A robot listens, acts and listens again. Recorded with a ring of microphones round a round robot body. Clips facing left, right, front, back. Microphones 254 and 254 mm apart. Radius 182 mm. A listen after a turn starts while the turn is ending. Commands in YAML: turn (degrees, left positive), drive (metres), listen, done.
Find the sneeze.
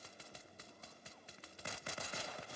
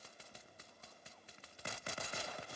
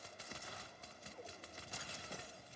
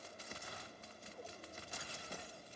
listen: true
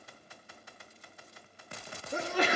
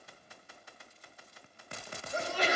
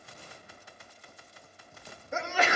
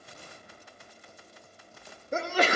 turn: 130
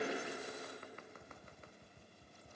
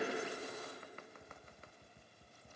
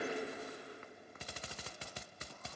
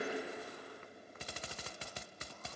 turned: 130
done: "Facing where the sneeze came from. I can't hear it now."